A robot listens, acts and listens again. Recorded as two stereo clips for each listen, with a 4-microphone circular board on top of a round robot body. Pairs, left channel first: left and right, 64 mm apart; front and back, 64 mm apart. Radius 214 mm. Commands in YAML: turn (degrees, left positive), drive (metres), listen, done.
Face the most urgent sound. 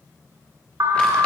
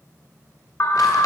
turn: -50
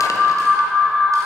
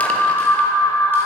done: "Facing the alarm."